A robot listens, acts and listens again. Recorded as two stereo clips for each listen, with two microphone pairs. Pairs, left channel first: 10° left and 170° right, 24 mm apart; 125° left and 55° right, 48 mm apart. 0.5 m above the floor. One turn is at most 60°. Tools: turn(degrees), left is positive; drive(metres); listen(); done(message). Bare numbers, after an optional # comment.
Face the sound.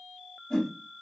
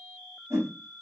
# The whoosh: 55° right.
turn(-55)
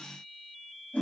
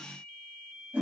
done("Facing the whoosh.")